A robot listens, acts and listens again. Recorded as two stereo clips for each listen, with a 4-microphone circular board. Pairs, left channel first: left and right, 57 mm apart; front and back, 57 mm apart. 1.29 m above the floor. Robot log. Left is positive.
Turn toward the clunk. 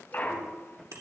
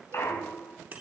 note: The clunk: 40° left.
cmd yaw +40
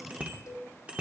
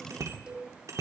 end: Facing where the clunk came from. I can't hear it now.